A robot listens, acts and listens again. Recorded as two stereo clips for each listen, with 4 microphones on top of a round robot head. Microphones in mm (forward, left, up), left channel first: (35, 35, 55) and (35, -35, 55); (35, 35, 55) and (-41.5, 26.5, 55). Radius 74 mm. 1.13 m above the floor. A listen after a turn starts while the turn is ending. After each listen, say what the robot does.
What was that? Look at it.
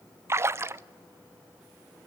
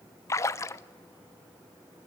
Turn 45° right.
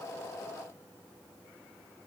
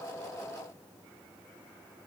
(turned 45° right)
I heard a splash from this way, but can't make it out now.